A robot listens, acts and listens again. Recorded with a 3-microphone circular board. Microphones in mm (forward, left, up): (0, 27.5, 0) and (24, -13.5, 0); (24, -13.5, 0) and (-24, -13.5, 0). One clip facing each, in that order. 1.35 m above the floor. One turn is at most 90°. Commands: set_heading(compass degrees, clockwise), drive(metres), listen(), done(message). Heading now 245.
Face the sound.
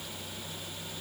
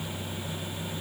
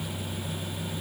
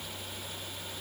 listen()
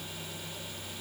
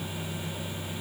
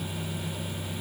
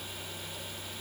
listen()
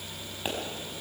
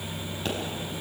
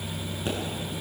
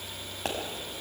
set_heading(335)
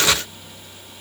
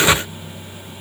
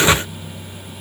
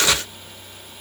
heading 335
set_heading(50)
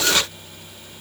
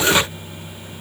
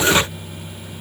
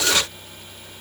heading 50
done("Facing where the pop came from. I can't hear it now.")